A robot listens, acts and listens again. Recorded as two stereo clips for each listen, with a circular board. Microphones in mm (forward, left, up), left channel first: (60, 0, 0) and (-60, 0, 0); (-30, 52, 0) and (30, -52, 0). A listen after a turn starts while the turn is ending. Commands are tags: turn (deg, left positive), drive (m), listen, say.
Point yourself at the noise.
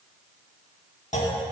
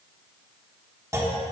<say>Found it: a clunk, straight ahead, 1 to 2 m away.</say>